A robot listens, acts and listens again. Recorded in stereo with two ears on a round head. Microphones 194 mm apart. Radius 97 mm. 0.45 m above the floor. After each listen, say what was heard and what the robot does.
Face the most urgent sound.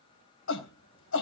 The shout: about 65° left or 115° left. Turn 65° left.
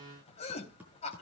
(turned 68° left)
So it is at 35° left. Turn 35° left.
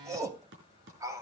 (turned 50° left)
The shout is now 15° right. Turn 15° right.
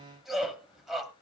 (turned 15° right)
Facing the shout.